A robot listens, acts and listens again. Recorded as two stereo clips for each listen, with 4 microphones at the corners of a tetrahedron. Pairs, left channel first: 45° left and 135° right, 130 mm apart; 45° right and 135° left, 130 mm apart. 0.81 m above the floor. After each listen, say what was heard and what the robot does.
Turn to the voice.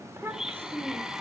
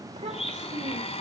The child speaking: 155° left. Turn 155° left.
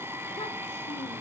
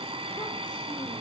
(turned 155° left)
Keep listening.
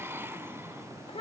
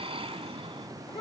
Found it: a child speaking, straight ahead, 2 to 4 m away.